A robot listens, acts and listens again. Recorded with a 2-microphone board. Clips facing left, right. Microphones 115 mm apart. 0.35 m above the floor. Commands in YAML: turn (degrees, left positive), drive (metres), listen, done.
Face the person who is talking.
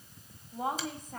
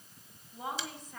turn: 50
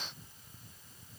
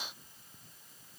listen: true
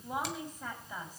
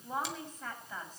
turn: 15
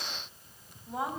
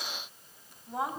done: "Found it: a woman speaking, straight ahead."